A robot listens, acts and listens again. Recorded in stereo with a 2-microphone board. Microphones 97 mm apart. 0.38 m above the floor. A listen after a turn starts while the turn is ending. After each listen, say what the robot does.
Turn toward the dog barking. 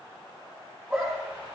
Turn 30° right.
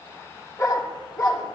Turn 40° left.
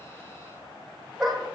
Found it: a dog barking, straight ahead, over 4 m away.